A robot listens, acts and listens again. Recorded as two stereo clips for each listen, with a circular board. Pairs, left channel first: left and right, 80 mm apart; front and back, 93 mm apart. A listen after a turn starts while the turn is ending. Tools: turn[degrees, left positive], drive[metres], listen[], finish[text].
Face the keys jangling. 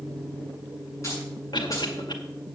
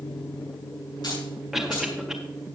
Thought: The keys jangling: 40° left.
Action: turn[40]
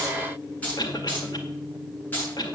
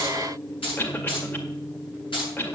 Thought: The keys jangling is now 25° left.
Action: turn[25]
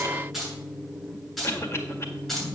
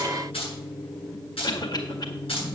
Action: finish[Facing the keys jangling.]